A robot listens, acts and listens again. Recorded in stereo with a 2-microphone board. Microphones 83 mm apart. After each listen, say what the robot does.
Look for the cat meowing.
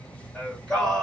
Keep listening.
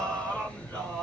Keep listening.
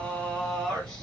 I can't make out a cat meowing, only singing.